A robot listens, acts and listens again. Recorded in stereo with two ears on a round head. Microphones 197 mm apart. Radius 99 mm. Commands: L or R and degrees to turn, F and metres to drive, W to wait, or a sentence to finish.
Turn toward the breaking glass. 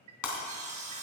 L90
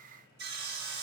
Facing where the breaking glass came from. I can't hear it now.